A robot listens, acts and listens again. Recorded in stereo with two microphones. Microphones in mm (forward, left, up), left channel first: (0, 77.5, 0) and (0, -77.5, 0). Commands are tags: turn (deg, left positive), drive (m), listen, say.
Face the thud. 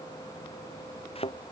<turn deg="35"/>
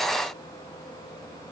<listen/>
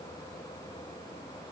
<say>I heard a thud, but can't make it out now. It was about straight ahead or 110° left.</say>